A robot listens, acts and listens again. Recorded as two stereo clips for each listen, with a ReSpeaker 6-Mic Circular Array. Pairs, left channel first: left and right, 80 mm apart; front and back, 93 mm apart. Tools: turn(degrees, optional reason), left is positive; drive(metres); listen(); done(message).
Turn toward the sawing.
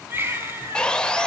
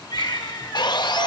turn(degrees=15, reason="The sawing: 15° left.")
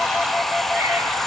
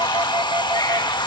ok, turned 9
done("Facing the sawing, under 1 m away.")